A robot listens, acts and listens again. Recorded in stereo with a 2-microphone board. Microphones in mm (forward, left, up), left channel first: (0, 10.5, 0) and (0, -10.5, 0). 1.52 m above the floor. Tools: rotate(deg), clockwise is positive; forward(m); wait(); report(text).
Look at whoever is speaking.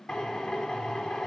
wait()
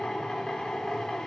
wait()
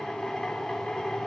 report("I can't make out anyone speaking to turn to.")